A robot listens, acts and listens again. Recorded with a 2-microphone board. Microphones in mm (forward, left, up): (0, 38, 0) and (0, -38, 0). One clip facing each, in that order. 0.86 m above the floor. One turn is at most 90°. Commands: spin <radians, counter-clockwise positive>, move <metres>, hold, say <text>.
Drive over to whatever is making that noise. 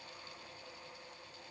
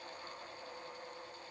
hold
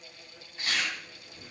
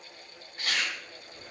spin -0.96
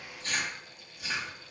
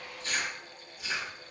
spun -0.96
move 1.0
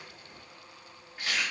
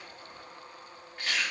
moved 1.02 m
move 1.0
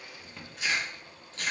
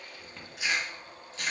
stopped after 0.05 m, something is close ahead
say I am next to the chewing.